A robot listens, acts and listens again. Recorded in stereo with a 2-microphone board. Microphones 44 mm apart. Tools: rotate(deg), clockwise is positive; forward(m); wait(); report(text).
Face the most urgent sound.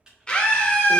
rotate(-25)
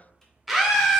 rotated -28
report("Facing the scream.")